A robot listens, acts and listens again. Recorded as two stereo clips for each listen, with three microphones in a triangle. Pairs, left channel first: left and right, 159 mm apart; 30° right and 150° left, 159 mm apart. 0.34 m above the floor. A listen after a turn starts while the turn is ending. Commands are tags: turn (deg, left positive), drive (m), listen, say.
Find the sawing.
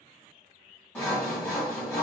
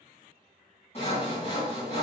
<turn deg="15"/>
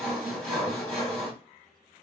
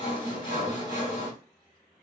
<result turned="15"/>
<say>Found it: sawing, straight ahead, 2 to 4 m away.</say>